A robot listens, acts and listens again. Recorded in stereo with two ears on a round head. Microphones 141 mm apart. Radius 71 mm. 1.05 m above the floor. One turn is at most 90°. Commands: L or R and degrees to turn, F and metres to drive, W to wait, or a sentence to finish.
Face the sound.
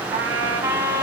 R20
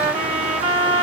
R90
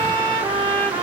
R30
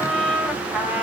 Facing the trumpet.